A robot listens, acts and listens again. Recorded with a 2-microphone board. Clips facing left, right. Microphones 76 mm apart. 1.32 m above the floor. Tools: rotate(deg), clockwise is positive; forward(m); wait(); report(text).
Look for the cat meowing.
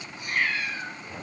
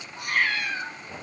rotate(65)
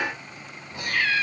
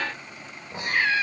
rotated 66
rotate(30)
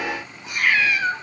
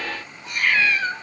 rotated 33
rotate(-10)
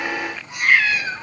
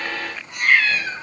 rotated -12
rotate(-10)
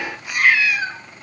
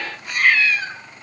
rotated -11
rotate(-15)
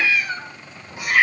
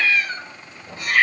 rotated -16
rotate(-10)
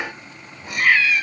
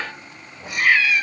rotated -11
report("Facing the cat meowing.")